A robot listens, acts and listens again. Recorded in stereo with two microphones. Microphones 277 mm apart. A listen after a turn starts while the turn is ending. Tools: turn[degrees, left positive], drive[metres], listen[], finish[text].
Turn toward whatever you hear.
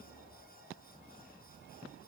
Action: listen[]
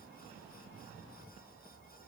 Action: listen[]
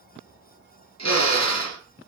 Thought: The drill: about 75° left or 105° left.
Action: turn[75]
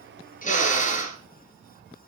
Thought: So it is at 25° left.
Action: turn[25]
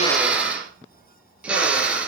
Action: finish[Found it: a drill, straight ahead.]